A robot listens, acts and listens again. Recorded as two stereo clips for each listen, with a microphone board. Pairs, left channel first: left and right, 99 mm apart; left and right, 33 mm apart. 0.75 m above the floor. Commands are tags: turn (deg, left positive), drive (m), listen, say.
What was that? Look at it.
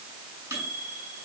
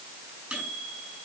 <turn deg="-25"/>
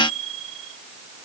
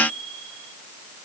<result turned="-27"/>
<say>Facing the microwave.</say>